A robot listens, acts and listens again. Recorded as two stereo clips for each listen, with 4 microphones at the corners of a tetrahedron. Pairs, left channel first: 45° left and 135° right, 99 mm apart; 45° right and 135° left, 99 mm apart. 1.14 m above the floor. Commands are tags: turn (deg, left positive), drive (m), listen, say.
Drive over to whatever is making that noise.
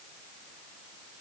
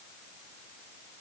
<listen/>
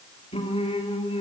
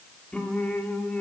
<turn deg="35"/>
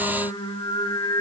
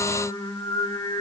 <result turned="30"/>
<drive m="1.0"/>
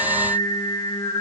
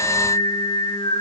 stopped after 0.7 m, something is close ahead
<say>Something is in my way. I am facing the singing but have not reached it.</say>